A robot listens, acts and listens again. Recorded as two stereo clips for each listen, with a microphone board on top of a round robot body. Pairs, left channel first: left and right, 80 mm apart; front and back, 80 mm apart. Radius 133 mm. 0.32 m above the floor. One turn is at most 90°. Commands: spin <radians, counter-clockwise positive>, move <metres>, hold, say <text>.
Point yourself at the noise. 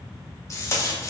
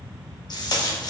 spin 0.61
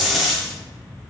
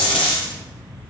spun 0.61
say Found it: tape being pulled, straight ahead.